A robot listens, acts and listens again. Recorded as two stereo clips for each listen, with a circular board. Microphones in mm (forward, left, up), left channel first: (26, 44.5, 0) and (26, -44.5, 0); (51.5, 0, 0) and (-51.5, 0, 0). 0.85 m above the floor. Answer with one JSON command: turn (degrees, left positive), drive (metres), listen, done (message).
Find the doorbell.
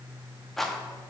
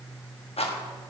{"listen": true}
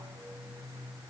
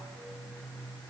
{"listen": true}
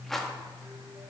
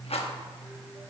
{"done": "I can't make out a doorbell, only a rattle."}